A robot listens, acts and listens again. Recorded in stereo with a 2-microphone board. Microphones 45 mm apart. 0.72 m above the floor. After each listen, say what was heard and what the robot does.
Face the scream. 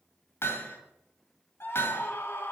The scream: about 60° left or 120° left. Turn 60° left.
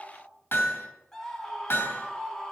So it is at 15° left. Turn 15° left.
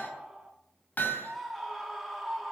Facing the scream.